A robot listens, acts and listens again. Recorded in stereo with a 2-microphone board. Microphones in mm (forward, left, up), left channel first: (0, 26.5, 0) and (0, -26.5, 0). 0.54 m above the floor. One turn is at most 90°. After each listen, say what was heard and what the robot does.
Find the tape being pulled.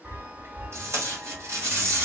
The tape being pulled: about 65° right or 115° right. Turn 65° right.
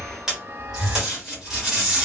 So it is at 10° right. Turn 10° right.
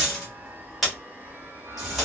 Facing the tape being pulled.